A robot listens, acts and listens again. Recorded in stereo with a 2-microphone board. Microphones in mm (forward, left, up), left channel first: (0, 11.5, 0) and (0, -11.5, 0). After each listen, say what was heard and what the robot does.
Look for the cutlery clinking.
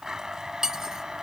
The cutlery clinking: about 25° right or 155° right. Turn 25° right.
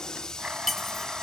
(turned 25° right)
Found it: cutlery clinking, straight ahead.